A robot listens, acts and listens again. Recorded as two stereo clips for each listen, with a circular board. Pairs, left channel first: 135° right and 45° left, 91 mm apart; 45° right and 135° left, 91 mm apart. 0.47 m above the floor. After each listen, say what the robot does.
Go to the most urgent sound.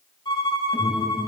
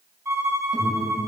Turn 70° right.
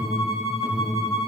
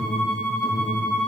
Turn 25° right.
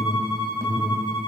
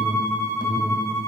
Turn 10° right.
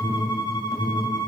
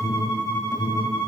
Drive 1.0 m forward.
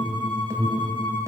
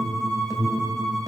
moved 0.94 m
Drive 1.0 m forward.
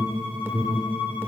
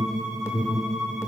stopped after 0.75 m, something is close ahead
I am next to the alarm.